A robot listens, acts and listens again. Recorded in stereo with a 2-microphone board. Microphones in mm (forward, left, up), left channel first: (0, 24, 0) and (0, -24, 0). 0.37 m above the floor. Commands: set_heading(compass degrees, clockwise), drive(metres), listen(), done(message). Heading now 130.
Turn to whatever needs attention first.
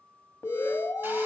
set_heading(65)
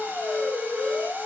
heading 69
set_heading(29)
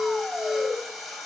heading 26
done("Facing the alarm.")